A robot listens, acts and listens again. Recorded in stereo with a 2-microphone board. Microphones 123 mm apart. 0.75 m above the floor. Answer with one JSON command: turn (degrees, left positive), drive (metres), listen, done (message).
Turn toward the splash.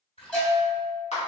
{"turn": 50}
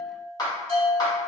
{"listen": true}
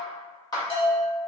{"done": "I heard a splash, but can't make it out now. It was about straight ahead or 80° left."}